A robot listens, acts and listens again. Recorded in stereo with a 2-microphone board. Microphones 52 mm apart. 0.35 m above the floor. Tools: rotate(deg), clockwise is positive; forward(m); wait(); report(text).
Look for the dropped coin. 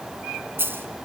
rotate(45)
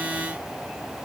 wait()
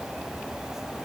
report("I heard a dropped coin, but can't make it out now. It was about straight ahead or 90° right.")